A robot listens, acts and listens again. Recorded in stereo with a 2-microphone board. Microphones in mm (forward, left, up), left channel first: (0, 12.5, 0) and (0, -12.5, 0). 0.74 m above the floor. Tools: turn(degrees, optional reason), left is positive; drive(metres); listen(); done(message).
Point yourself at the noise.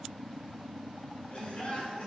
turn(degrees=55, reason="The laughter: about 55° left or 125° left.")
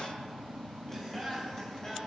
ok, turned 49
turn(degrees=15, reason="So it is at 15° left.")
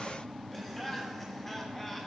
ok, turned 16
turn(degrees=10, reason="The laughter is now 10° left.")
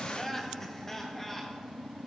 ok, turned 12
turn(degrees=10, reason="The laughter is now 10° left.")
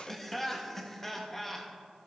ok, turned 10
turn(degrees=10, reason="The laughter is now 10° left.")
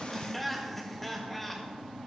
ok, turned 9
done("Facing the laughter.")